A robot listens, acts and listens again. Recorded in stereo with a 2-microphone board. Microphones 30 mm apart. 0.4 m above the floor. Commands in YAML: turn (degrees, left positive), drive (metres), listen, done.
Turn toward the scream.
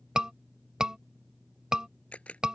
turn: -30
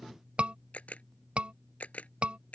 turn: -115
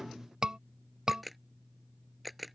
turn: -30
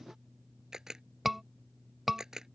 turn: -10
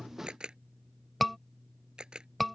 done: "Facing the scream."